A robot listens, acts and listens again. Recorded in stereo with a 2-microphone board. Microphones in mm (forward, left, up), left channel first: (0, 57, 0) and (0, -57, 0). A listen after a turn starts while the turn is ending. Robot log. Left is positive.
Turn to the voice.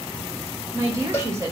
note: The woman speaking: about 30° right or 150° right.
cmd yaw -30
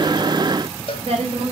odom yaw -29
note: So it is at 125° right.
cmd yaw -125
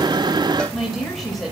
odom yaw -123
end: Found it: a woman speaking, straight ahead.